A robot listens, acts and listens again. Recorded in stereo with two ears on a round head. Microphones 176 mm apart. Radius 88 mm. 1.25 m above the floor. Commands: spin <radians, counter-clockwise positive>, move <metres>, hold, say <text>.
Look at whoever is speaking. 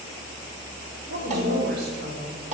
spin -1.05
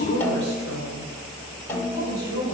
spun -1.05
spin -0.96
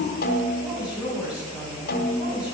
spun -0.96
say Found it: a woman speaking, straight ahead, over 4 m away.